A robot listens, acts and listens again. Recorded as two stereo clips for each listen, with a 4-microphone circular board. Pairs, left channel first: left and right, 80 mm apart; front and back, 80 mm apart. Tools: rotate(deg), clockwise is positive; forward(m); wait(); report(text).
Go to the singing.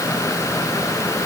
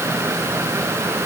wait()
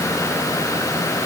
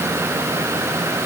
wait()
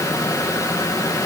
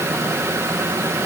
report("I can't make out singing to turn to.")